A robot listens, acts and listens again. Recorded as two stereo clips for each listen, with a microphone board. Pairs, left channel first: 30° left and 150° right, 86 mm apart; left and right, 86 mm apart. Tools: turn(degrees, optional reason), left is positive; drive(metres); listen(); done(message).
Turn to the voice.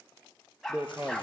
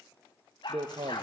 turn(degrees=-80, reason="The man speaking: 80° right.")
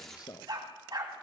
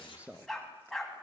turn(degrees=-15, reason="The man speaking is now 15° right.")
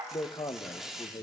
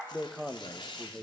done("Facing the man speaking.")